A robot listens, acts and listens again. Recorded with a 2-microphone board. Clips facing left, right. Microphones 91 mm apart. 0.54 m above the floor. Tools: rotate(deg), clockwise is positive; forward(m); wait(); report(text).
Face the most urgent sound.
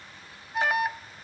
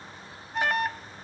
rotate(-30)
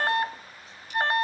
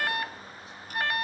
rotate(-145)
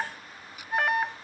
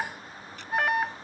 report("Found it: an alarm, straight ahead.")